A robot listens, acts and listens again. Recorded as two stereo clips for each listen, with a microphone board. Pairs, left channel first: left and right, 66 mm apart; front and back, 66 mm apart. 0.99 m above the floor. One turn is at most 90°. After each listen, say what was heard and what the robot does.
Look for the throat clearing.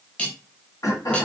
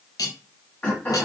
The throat clearing: 65° left. Turn 65° left.
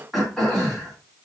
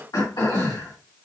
Facing the throat clearing.